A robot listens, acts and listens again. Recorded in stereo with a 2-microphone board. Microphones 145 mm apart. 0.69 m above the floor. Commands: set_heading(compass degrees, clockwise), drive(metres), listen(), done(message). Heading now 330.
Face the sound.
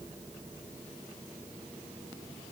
listen()
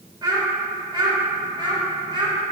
set_heading(5)
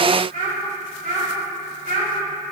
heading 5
set_heading(115)
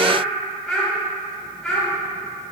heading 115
done("Facing the child speaking, 2 to 4 m away.")